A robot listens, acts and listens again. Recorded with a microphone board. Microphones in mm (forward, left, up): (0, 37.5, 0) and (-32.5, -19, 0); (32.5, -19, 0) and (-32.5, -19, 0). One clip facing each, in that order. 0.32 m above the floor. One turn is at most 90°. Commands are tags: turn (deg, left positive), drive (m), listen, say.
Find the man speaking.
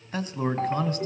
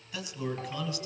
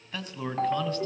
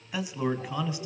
<turn deg="90"/>
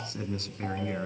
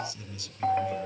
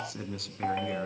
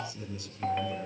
<turn deg="20"/>
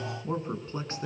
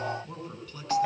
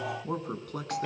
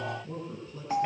<say>Found it: a man speaking, straight ahead, 2 to 4 m away.</say>